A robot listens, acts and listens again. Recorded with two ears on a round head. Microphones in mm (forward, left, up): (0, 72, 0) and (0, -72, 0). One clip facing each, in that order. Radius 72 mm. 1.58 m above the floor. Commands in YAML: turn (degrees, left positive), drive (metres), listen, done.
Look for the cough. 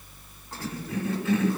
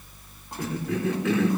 turn: -55
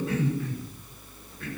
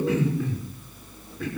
turn: -70
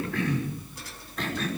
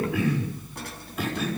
turn: -10
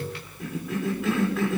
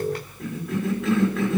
done: "Found it: a cough, straight ahead."